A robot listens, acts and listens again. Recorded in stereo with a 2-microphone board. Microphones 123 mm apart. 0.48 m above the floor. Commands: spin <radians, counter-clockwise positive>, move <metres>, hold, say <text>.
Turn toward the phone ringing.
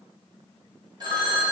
spin -0.61
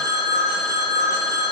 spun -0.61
spin -1.92
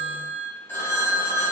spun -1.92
spin 0.35
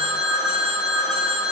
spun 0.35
say Facing the phone ringing.